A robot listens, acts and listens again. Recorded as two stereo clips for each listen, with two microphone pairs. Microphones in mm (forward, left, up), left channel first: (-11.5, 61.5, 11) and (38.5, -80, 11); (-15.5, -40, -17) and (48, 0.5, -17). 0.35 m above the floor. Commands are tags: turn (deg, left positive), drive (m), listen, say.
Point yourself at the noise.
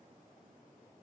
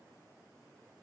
<listen/>
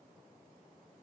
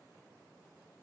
<listen/>
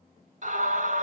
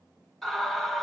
<turn deg="-60"/>
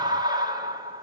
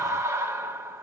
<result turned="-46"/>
<turn deg="-15"/>
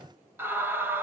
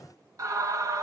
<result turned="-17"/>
<say>Facing the scream.</say>